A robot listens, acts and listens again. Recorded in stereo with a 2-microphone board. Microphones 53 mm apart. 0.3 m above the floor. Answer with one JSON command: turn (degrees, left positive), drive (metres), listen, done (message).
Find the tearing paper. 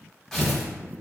{"turn": 30}
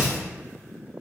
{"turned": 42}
{"turn": 135}
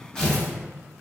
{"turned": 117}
{"turn": 20}
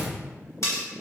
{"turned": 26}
{"listen": true}
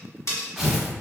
{"done": "Facing the tearing paper."}